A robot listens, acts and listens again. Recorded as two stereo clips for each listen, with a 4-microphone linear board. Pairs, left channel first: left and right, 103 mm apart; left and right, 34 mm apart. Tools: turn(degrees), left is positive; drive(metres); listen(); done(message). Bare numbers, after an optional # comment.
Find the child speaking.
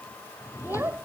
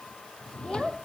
# The child speaking: about 20° right or 160° right.
turn(-20)
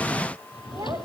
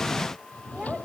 listen()
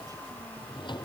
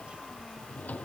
listen()
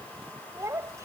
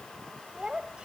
# The child speaking: about 30° right or 150° right.
turn(-30)
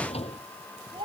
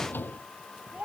# So it is at 120° right.
turn(-120)
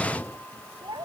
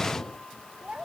# The child speaking is now 45° right.
turn(-45)
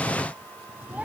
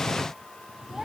listen()
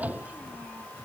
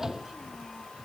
listen()
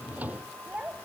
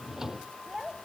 # The child speaking is now 15° right.
turn(-15)
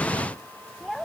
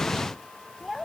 done("Found it: a child speaking, straight ahead.")